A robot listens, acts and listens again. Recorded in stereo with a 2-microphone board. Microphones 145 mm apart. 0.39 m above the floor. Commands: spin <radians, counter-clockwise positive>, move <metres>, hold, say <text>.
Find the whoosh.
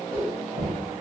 spin -0.35
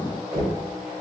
hold
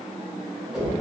say Found it: a whoosh, straight ahead.